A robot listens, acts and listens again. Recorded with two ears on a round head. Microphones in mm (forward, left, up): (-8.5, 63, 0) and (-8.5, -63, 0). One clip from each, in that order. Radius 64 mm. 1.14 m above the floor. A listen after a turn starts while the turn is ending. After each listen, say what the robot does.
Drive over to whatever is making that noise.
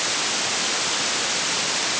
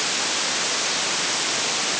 Keep listening.
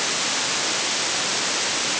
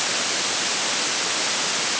Keep listening.
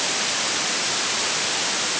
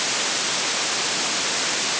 I can't make out anything.